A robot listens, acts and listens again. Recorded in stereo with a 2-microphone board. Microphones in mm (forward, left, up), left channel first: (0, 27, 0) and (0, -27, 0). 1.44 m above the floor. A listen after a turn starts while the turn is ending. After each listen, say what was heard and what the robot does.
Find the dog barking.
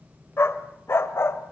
The dog barking: about 50° left or 130° left. Turn 50° left.
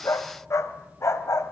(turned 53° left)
So it is at 65° left. Turn 65° left.
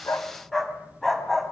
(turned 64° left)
Found it: a dog barking, straight ahead, 2 to 4 m away.